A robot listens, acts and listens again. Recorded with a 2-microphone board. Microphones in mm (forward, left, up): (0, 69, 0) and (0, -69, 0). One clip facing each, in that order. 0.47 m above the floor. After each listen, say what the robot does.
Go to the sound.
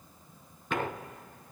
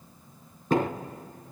Turn 40° right.
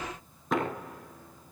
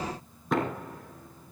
Drive 1.0 m forward.
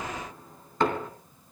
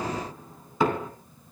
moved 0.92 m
Drive 1.0 m forward.
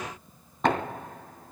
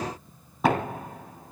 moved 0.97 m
Drive 1.0 m forward.
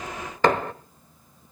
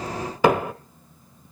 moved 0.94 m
Turn 10° right.
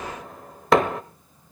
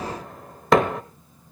Drive 1.0 m forward.
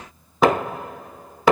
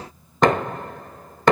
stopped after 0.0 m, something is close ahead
Arrived at the knocking, straight ahead.